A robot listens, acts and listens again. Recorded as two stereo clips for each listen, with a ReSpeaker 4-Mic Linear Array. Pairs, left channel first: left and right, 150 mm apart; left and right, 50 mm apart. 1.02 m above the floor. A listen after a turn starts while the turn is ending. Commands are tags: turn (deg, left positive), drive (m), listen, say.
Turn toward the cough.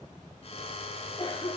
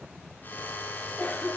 <turn deg="30"/>
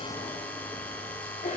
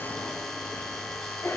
<turn deg="120"/>
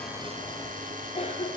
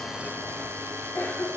<turn deg="45"/>
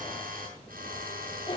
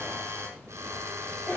<turn deg="35"/>
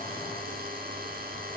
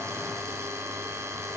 <listen/>
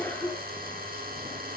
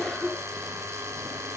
<turn deg="15"/>
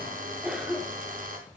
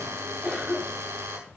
<say>Facing the cough.</say>